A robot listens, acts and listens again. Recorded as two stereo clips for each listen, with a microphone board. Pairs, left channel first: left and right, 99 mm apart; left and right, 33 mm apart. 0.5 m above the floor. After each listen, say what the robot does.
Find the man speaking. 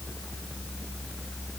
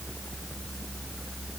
Keep listening.
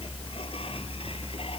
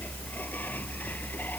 Keep listening.
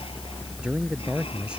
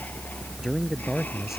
Turn 30° right.
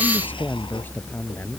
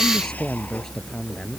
Turn 20° left.
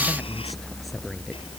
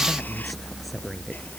Keep listening.
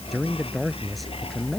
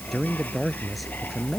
Found it: a man speaking, straight ahead.